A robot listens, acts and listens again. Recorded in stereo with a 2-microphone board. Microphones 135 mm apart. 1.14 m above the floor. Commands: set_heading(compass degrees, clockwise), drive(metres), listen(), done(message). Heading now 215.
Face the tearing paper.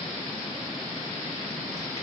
listen()
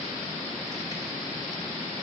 listen()
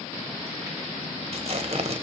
set_heading(265)
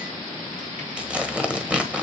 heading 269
set_heading(279)
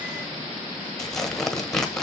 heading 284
done("Facing the tearing paper, 1 to 2 m away.")